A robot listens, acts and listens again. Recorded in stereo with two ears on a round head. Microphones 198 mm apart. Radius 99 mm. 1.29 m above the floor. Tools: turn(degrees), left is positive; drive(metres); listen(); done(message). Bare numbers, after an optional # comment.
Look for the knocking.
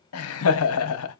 listen()
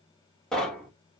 turn(30)
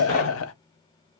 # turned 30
listen()
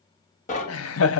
# So it is at 145° left.
turn(145)
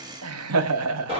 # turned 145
# The knocking is now 25° right.
turn(-25)
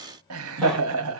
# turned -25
listen()
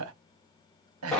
done("Found it: knocking, straight ahead, 1 to 2 m away.")